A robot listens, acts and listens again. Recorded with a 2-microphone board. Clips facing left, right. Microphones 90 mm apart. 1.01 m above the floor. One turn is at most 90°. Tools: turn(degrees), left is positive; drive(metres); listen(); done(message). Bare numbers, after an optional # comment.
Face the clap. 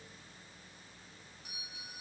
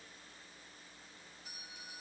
listen()
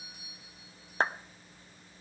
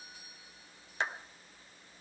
# The clap: about 45° left or 135° left.
turn(45)
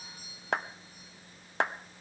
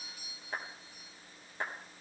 # So it is at 90° left.
turn(90)
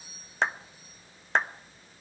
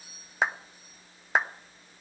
done("Facing the clap, under 1 m away.")